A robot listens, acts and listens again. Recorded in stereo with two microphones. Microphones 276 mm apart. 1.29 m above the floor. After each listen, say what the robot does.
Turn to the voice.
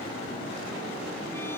Keep listening.
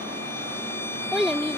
Turn 30° left.
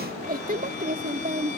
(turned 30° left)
Turn 30° right.
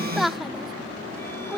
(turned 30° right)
Found it: a child speaking, straight ahead.